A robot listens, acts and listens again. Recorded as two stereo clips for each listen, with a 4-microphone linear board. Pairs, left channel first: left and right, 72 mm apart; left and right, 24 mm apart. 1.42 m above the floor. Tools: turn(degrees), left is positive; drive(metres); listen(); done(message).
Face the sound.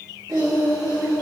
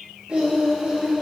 turn(degrees=-55)
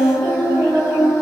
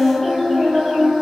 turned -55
turn(degrees=-80)
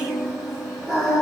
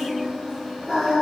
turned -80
done("Found it: singing, straight ahead, 2 to 4 m away.")